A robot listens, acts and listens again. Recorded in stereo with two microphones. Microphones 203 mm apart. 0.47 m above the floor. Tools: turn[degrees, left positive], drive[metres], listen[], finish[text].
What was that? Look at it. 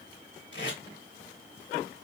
Thought: The tape being pulled: about 60° left or 120° left.
Action: turn[60]
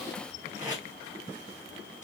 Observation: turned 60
Thought: So it is at 40° left.
Action: turn[40]
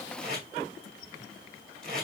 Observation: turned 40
Action: finish[Facing the tape being pulled, 2 to 4 m away.]